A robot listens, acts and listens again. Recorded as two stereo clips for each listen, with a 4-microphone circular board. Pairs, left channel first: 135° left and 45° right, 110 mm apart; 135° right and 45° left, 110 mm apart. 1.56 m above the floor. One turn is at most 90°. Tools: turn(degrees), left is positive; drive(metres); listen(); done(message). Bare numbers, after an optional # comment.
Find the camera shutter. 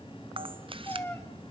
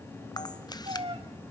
# The camera shutter: 80° right.
turn(-80)
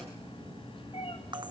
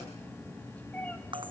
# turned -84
done("Found it: a camera shutter, straight ahead, under 1 m away.")